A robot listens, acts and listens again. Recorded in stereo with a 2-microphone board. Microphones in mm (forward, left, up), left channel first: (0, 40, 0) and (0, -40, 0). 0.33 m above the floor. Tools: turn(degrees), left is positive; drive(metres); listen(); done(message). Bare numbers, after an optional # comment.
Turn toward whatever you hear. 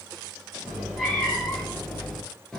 turn(30)
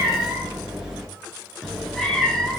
turn(30)
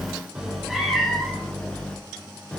turn(30)
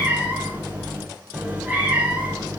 # So it is at 15° right.
turn(-15)
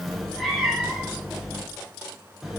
done("Facing the cat meowing.")